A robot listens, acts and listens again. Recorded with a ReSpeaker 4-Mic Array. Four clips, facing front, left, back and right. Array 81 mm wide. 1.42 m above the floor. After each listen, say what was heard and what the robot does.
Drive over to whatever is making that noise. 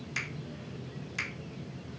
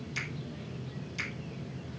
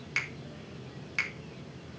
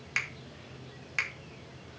The finger snap: 115° right. Turn 115° right.
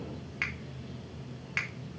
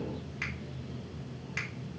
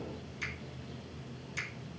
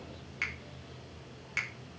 The finger snap is now 15° right. Turn 15° right.
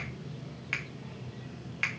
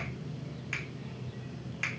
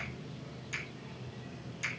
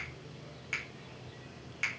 Drive 1.0 m forward.
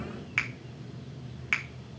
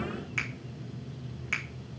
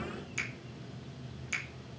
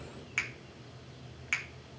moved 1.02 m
Drive 1.0 m forward.
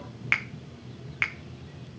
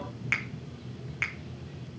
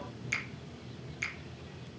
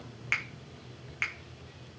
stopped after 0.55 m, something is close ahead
I am next to the finger snap.